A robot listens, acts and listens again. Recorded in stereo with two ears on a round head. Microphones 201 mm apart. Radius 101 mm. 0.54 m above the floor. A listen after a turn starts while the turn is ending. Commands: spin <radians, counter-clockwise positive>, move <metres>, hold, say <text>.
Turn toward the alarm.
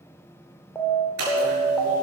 spin 0.52
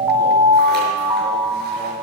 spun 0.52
spin -0.26
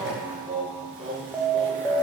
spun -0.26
say Found it: an alarm, straight ahead, 1 to 2 m away.